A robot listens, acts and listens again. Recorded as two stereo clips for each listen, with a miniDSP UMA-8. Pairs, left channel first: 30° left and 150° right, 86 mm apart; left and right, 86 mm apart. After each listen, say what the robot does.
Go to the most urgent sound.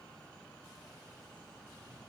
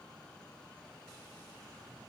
Keep listening.
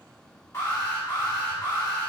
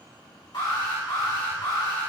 Turn 85° left.
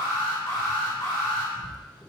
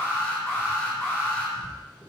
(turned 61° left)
Turn 25° left.
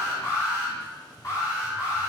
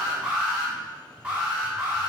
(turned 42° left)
Turn 15° right.
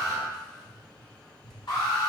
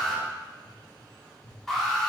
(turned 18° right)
Drive 1.0 m forward.
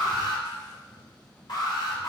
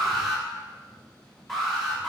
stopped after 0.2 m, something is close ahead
Something is in my way. I am facing the alarm but have not reached it.